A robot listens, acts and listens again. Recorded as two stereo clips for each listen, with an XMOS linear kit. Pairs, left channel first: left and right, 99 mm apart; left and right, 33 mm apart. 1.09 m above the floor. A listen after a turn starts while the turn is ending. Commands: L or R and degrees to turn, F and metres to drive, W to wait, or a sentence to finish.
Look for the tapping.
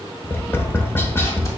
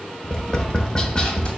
L20
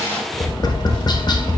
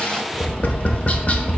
L140
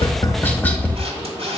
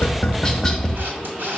L15
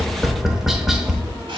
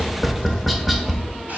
Facing the tapping.